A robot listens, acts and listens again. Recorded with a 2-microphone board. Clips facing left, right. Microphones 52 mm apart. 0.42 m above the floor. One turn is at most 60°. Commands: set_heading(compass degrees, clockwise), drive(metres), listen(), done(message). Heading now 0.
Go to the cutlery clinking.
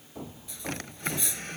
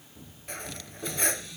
set_heading(55)
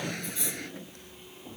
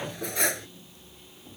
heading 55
set_heading(115)
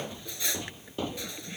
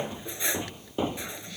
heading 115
set_heading(140)
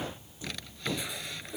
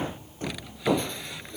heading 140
set_heading(130)
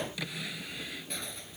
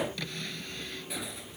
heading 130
drive(1.0)
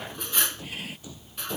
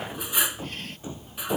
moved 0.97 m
set_heading(140)
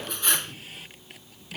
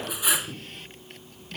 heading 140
drive(1.0)
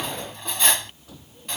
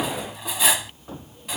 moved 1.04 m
drive(1.0)
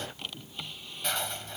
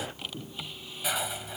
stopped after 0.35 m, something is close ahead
set_heading(150)
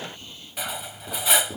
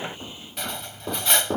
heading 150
done("Arrived at the cutlery clinking, straight ahead.")